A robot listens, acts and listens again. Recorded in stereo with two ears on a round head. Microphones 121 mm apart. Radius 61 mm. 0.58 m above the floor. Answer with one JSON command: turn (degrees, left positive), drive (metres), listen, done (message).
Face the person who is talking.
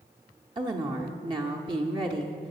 {"turn": -35}
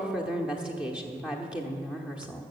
{"turn": -10}
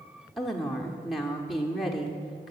{"done": "Found it: a woman speaking, straight ahead, 1 to 2 m away."}